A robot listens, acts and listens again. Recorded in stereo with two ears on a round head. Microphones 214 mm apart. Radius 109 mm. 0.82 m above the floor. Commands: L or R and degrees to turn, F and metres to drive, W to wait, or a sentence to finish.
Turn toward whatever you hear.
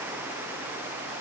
W
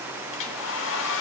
L60
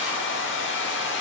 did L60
L55
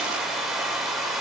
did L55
Facing the hair dryer.